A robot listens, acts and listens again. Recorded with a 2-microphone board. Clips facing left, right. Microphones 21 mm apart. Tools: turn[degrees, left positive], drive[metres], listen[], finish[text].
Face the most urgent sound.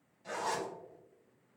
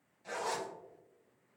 Action: listen[]
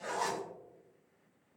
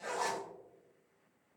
Action: listen[]
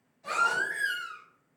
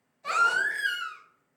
Thought: The baby crying: about 50° right or 130° right.
Action: turn[-50]
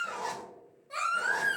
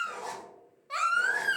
Thought: So it is at 70° right.
Action: turn[-70]
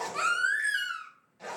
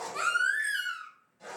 Action: finish[Facing the baby crying.]